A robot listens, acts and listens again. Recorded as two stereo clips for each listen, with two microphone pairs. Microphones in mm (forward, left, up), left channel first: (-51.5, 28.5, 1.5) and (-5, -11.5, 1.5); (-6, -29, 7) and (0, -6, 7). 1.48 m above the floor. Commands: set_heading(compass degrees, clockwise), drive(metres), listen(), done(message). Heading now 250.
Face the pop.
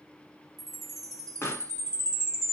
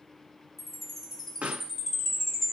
set_heading(155)
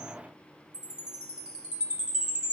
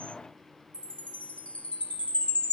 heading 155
done("I heard a pop from this way, but can't make it out now.")